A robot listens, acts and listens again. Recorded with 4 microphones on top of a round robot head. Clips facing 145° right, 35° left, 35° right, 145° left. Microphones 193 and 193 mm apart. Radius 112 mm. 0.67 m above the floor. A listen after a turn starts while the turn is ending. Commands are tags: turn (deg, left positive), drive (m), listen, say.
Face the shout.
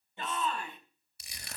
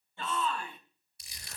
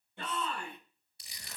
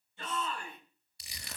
<turn deg="-75"/>
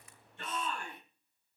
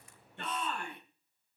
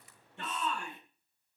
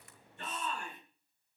<say>Facing the shout.</say>